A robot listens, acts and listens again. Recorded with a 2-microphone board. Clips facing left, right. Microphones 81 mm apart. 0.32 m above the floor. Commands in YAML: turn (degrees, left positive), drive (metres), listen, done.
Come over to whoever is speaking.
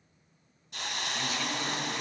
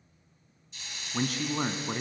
turn: -50
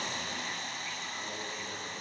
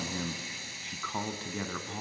turn: -70
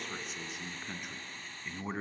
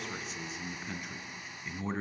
drive: 1.0
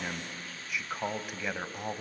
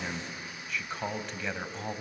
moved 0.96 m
turn: 10
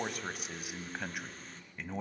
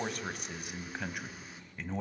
drive: 1.0
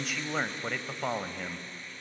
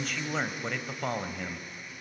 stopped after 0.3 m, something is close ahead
done: "Arrived at the man speaking, straight ahead."